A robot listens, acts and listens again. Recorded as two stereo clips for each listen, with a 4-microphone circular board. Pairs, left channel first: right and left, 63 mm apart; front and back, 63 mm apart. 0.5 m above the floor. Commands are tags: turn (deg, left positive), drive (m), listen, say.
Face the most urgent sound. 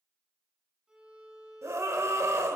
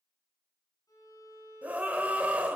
<turn deg="115"/>
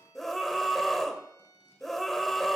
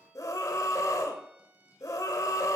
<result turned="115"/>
<say>Facing the scream.</say>